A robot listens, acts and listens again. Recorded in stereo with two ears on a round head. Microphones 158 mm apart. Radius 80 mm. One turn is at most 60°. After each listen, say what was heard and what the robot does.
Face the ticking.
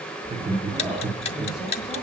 The ticking: about 35° left or 145° left. Turn 35° left.
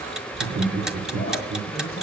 Keep listening.
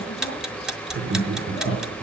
Found it: ticking, straight ahead.